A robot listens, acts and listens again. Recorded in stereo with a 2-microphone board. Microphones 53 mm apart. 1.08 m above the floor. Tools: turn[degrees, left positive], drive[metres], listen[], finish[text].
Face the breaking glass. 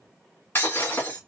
Thought: The breaking glass: about 45° left or 135° left.
Action: turn[45]
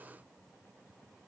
Action: listen[]
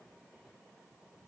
Action: finish[I heard breaking glass, but can't make it out now. It was about straight ahead or 90° left.]